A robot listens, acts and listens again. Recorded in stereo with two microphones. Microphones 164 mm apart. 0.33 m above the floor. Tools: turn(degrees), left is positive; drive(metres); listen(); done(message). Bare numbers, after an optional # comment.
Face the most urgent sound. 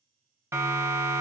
# The siren: about 15° right or 165° right.
turn(-15)
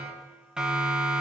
done("Found it: a siren, straight ahead, 2 to 4 m away.")